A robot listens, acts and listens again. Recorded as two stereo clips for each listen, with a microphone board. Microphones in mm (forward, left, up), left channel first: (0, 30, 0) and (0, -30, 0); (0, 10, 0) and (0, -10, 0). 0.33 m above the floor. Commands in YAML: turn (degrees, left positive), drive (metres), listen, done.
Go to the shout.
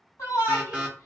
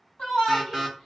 turn: 60
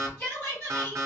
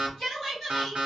turn: 20
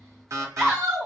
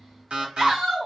drive: 1.0
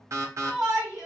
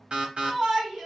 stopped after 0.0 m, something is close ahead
done: "Blocked. The shout is further on, straight ahead."